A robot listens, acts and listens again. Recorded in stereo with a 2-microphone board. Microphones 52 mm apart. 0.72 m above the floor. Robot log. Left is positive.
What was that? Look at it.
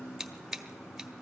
cmd yaw -30
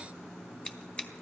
note: So it is at 25° left.
cmd yaw +25
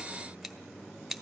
end: Found it: scissors, straight ahead, 1 to 2 m away.